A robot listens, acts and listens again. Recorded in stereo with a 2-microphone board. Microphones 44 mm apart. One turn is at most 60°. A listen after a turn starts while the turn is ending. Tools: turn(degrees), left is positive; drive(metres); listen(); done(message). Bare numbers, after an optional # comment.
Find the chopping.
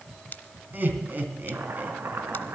turn(-60)
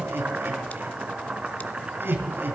# So it is at 30° right.
turn(-30)
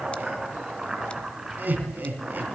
# The chopping is now 15° right.
turn(-15)
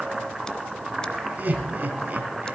done("Found it: chopping, straight ahead.")